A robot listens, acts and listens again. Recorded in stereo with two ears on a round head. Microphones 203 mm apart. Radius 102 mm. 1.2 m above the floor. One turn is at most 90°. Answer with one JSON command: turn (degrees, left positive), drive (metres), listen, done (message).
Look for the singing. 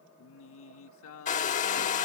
{"turn": 70}
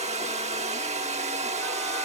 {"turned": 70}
{"listen": true}
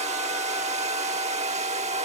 {"listen": true}
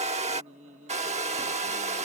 {"turn": -30}
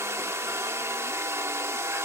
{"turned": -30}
{"listen": true}
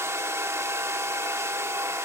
{"listen": true}
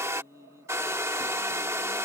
{"turn": -15}
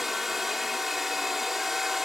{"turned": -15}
{"listen": true}
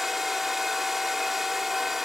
{"listen": true}
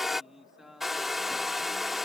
{"done": "Facing the singing."}